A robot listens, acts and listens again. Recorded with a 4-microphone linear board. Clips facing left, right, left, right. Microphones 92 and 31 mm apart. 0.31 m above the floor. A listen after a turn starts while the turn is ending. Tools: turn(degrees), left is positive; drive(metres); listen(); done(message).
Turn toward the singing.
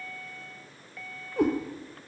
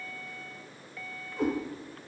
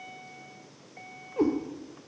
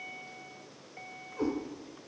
listen()
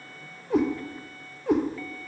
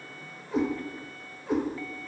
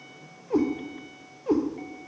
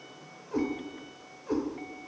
listen()
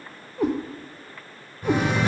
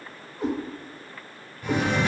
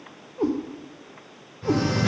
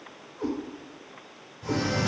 turn(degrees=40)
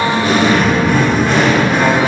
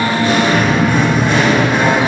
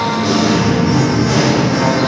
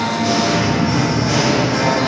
done("Found it: singing, straight ahead.")